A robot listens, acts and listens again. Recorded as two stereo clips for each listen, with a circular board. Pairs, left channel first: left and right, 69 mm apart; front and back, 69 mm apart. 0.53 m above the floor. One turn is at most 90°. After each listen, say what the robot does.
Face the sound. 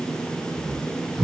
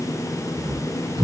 Turn 90° right.
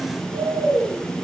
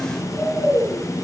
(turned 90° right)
Turn 90° right.
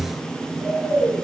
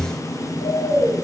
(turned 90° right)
Turn 15° right.
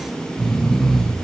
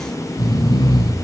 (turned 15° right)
Found it: snoring, straight ahead.